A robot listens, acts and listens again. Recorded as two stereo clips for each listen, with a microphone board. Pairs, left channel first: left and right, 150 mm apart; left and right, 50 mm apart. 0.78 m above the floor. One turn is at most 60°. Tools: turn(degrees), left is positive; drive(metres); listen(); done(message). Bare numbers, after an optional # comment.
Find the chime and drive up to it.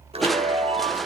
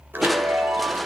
# The chime: about 40° right or 140° right.
turn(-40)
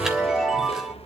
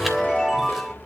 drive(1.0)
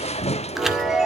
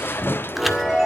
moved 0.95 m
drive(1.0)
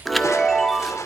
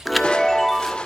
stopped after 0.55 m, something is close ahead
done("Arrived at the chime, straight ahead.")